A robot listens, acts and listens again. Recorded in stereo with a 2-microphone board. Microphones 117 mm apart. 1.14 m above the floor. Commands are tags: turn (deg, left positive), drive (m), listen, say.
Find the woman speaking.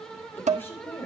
<turn deg="20"/>
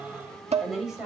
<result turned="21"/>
<say>Found it: a woman speaking, straight ahead, over 4 m away.</say>